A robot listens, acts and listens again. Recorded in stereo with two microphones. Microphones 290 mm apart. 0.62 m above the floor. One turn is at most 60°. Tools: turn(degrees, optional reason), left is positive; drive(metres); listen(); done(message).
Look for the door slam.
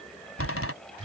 turn(degrees=50, reason="The door slam: about 50° left or 130° left.")
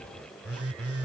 listen()
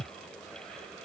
done("I heard a door slam, but can't make it out now. It was about straight ahead or 80° left.")